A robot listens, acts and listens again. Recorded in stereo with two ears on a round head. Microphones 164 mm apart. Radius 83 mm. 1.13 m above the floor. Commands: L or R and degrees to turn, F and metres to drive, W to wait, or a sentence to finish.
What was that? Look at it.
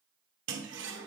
R65
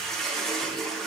Found it: a toilet flushing, straight ahead, 1 to 2 m away.